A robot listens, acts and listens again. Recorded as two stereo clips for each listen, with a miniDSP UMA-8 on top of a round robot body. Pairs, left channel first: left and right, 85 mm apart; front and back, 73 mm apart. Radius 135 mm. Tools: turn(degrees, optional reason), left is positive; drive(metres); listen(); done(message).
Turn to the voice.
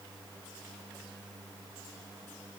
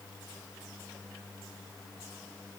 listen()
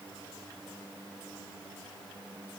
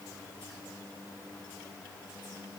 listen()
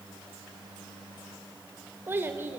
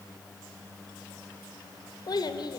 turn(degrees=-25, reason="The child speaking: 25° right.")
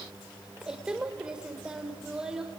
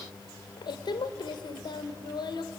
turn(degrees=-10, reason="The child speaking is now 10° right.")
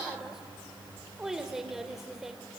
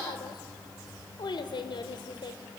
done("Found it: a child speaking, straight ahead.")